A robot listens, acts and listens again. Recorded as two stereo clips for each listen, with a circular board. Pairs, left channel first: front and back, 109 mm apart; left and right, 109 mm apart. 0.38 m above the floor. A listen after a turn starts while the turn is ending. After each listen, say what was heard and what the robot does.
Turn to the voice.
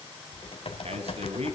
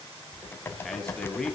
The man speaking: 175° left. Turn 175° left.
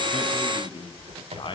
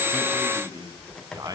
The man speaking is now 35° right. Turn 35° right.
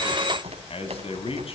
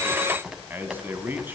The man speaking is now 20° right. Turn 20° right.
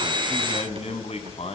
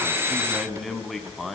Facing the man speaking.